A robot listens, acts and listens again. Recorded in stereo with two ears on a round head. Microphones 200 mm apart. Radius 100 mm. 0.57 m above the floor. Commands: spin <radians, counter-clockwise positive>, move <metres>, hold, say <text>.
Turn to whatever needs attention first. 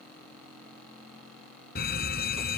spin 0.79
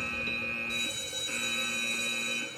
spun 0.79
say Found it: a fire alarm, straight ahead.